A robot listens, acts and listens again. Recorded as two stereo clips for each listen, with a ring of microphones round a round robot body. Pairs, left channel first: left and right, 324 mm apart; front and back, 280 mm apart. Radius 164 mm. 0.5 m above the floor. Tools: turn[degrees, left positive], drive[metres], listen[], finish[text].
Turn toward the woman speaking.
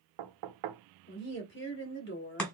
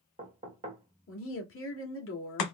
Thought: The woman speaking: 35° left.
Action: turn[35]
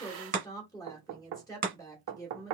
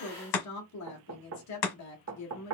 Thought: The woman speaking is now 10° left.
Action: turn[10]
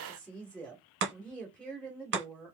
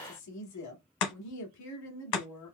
Action: finish[Found it: a woman speaking, straight ahead.]